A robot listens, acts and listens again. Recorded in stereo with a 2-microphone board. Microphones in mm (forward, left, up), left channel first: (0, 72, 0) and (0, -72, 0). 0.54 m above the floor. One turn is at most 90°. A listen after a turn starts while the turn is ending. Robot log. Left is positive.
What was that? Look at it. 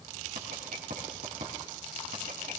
note: The writing: about 75° right or 105° right.
cmd yaw -75
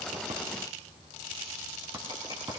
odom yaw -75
note: So it is at 30° right.
cmd yaw -30
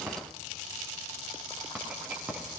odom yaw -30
note: The writing is now 10° right.
cmd yaw -10
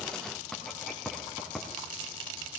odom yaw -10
end: Facing the writing.